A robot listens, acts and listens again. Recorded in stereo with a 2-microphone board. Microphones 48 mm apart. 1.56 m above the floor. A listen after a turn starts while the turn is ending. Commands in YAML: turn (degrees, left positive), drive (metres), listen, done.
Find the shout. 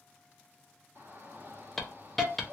turn: -40
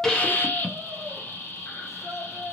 done: "Found it: a shout, straight ahead."